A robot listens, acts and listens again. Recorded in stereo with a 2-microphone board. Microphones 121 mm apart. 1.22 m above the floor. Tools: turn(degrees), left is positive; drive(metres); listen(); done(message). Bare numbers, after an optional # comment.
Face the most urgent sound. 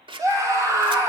# The scream: about 30° right or 150° right.
turn(-30)
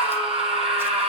# So it is at 120° right.
turn(-120)
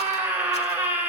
# The scream is now 15° right.
turn(-15)
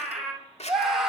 done("Facing the scream, over 4 m away.")